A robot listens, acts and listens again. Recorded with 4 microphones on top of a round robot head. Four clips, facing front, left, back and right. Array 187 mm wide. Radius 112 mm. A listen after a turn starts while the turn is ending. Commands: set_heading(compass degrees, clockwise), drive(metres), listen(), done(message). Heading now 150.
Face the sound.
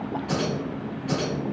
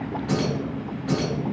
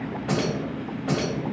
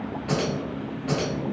set_heading(310)
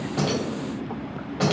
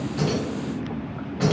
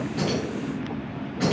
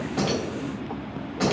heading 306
done("Found it: keys jangling, straight ahead.")